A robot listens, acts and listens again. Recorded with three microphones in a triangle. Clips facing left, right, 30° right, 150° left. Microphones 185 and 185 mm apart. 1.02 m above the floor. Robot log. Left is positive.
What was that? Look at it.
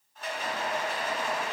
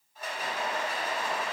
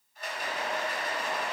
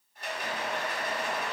note: The rattle: 170° right.
cmd yaw -170
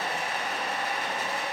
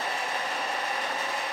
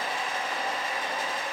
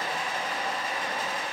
note: The rattle is now 15° left.
cmd yaw +15
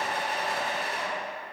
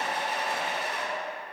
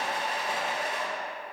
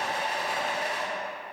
end: Found it: a rattle, straight ahead, 1 to 2 m away.